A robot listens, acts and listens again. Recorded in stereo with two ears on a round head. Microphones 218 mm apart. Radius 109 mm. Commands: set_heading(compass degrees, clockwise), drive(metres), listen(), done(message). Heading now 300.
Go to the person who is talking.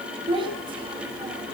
set_heading(320)
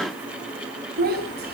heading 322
set_heading(97)
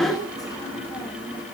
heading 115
set_heading(100)
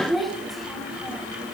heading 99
drive(1.0)
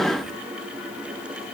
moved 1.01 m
listen()
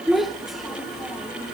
drive(1.0)
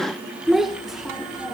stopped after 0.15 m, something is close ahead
done("I am next to the child speaking.")